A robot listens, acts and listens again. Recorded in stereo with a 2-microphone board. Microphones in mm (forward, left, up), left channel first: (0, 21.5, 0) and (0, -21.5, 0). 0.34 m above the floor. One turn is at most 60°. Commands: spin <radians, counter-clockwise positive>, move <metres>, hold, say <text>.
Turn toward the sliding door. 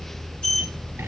spin 0.35
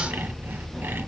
hold
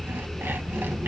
hold
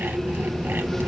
say Facing the sliding door, 2 to 4 m away.